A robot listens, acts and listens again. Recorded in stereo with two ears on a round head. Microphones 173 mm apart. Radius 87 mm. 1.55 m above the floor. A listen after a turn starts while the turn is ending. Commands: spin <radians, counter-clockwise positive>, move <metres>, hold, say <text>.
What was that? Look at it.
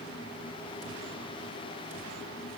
hold
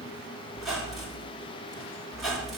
spin 0.52
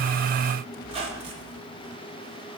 spin -0.52
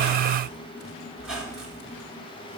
say Found it: a squeak, straight ahead, 1 to 2 m away.